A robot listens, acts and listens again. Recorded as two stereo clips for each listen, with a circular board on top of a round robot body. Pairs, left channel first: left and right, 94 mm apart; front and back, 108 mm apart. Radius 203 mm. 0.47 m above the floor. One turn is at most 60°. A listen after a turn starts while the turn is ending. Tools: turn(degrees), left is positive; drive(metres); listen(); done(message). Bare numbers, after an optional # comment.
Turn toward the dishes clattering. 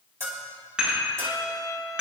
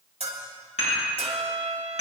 # The dishes clattering: 10° right.
turn(-10)
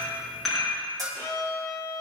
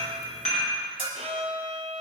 done("Facing the dishes clattering.")